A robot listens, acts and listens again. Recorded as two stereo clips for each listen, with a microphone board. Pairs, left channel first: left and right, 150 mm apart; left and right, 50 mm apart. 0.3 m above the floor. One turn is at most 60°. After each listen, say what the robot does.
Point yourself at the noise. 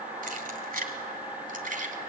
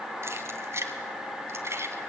Turn 60° right.
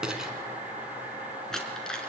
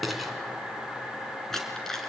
Found it: keys jangling, straight ahead.